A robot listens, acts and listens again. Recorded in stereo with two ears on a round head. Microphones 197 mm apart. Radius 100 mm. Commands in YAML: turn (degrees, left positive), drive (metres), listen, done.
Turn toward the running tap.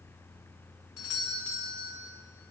listen: true
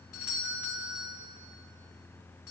listen: true
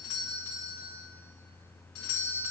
done: "I can't make out a running tap to turn to."